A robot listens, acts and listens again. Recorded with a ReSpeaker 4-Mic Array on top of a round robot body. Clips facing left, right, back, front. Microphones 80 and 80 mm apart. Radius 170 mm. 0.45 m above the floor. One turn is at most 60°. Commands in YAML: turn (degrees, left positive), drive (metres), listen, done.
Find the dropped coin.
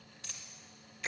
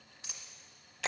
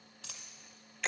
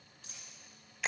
turn: -60
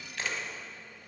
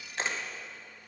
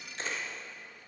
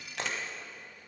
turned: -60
turn: -60
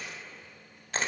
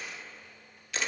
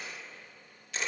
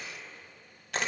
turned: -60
turn: -45
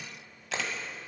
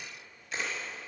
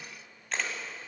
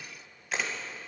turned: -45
done: "I heard a dropped coin from this way, but can't make it out now."